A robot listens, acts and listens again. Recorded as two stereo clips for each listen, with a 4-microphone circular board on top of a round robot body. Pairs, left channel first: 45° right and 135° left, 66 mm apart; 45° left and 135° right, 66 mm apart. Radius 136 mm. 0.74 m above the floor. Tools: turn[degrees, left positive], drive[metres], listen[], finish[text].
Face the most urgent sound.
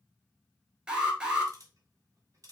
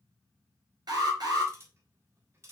Thought: The alarm: 150° right.
Action: turn[-150]
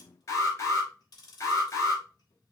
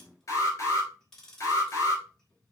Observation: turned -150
Action: finish[Facing the alarm.]